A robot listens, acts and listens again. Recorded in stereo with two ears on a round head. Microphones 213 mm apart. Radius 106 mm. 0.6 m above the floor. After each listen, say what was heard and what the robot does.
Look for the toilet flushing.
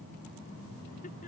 Keep listening.
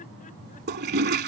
The toilet flushing: about 45° right or 135° right. Turn 45° right.
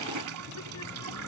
So it is at 90° right. Turn 90° right.
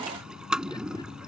Found it: a toilet flushing, straight ahead.